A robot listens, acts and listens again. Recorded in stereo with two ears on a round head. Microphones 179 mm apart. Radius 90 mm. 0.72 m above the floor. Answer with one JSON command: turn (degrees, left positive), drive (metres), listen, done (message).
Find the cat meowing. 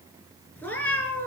{"turn": 30}
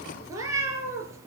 {"turn": -15}
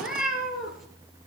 {"done": "Found it: a cat meowing, straight ahead."}